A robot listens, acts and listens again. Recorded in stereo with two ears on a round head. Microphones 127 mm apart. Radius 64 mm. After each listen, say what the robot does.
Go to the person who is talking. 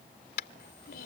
Turn 90° left.
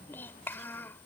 Turn 15° left.
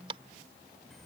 Keep listening.
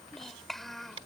Drive 1.0 m forward.
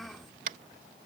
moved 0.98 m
Drive 1.0 m forward.
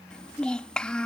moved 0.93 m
Drive 1.0 m forward.
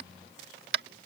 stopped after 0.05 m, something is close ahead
Keep listening.
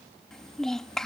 Arrived at the child speaking, straight ahead.